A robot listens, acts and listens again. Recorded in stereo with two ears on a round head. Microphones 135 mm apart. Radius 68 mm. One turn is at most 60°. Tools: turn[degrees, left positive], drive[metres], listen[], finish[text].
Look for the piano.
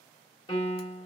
Thought: The piano: about 30° left or 150° left.
Action: turn[30]
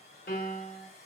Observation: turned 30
Thought: So it is at 120° left.
Action: turn[60]
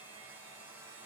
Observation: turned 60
Thought: Nothing new. It was at 60° left.
Action: turn[60]
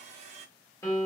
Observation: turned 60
Thought: The piano is now 20° left.
Action: turn[20]
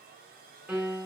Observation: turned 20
Action: finish[Found it: a piano, straight ahead.]